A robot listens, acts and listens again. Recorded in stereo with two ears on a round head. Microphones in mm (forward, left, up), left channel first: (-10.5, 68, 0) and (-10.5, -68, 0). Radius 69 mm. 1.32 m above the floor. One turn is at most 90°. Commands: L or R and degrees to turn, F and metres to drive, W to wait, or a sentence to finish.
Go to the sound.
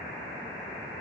W
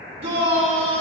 R50
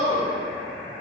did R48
R85
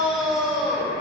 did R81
F1.0
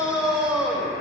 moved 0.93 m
F1.0
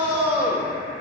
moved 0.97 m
R10
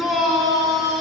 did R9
F1.0
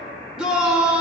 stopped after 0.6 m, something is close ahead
I am next to the shout.